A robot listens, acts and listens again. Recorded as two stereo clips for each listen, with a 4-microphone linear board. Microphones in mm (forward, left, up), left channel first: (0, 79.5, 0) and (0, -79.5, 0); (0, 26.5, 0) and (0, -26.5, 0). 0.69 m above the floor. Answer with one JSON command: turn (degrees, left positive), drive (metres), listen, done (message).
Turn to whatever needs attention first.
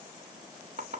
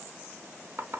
{"listen": true}
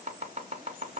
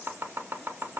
{"listen": true}
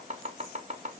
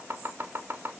{"done": "I can't make out anything urgent to turn to."}